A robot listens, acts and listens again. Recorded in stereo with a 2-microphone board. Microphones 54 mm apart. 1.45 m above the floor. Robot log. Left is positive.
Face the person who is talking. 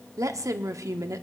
note: The woman speaking: about 70° right or 110° right.
cmd yaw -70
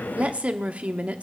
note: So it is at 25° right.
cmd yaw -25
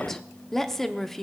end: Found it: a woman speaking, straight ahead, under 1 m away.